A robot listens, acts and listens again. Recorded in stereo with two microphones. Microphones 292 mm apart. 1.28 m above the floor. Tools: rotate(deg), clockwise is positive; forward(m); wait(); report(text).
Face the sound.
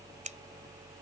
rotate(25)
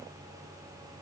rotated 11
wait()
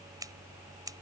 rotate(10)
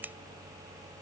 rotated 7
report("Found it: scissors, straight ahead.")